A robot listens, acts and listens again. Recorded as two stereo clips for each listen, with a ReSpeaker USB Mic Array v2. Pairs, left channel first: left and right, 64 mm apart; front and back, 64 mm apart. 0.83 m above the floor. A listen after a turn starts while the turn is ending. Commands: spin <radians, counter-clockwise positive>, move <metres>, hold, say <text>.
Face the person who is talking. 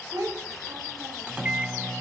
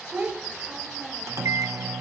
spin -2.01
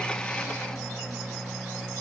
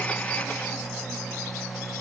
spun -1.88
hold
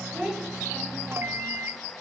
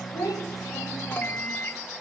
say Found it: a child speaking, straight ahead.